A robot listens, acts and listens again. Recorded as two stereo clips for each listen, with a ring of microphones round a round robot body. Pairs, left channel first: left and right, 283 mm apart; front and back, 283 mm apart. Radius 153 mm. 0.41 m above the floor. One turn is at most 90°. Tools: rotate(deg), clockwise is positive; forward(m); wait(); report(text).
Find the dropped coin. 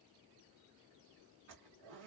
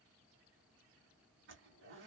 wait()
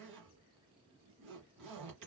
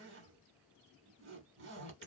wait()
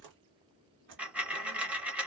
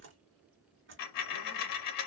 report("Facing the dropped coin, under 1 m away.")